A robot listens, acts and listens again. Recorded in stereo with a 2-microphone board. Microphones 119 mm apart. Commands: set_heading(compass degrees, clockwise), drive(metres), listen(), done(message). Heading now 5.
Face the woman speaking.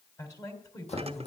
set_heading(335)
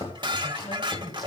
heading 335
set_heading(215)
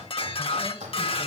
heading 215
listen()
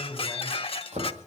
set_heading(205)
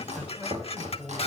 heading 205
done("Found it: a woman speaking, straight ahead.")